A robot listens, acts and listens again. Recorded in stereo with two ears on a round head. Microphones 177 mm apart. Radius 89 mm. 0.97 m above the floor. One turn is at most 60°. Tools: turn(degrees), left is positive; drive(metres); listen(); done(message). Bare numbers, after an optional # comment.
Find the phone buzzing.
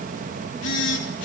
# The phone buzzing: about 65° left or 115° left.
turn(60)
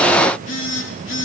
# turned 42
# So it is at 65° left.
turn(60)
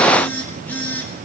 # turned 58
# The phone buzzing is now 10° left.
turn(10)
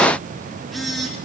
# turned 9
done("Found it: a phone buzzing, straight ahead, 2 to 4 m away.")